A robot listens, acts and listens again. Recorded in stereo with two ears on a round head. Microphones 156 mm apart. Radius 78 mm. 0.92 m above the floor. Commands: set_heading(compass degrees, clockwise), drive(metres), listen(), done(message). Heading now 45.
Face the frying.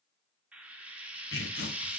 set_heading(75)
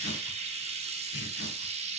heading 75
set_heading(215)
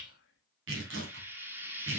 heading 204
set_heading(214)
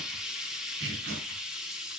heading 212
done("Facing the frying, 1 to 2 m away.")